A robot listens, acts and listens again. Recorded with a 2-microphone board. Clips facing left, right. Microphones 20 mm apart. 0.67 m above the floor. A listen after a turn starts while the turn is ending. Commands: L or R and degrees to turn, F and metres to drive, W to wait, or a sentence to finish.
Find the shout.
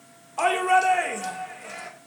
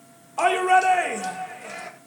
R30
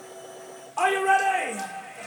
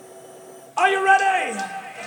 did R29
R150
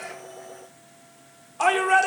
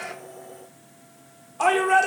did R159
L10
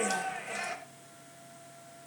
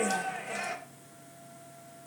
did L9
Facing the shout, 1 to 2 m away.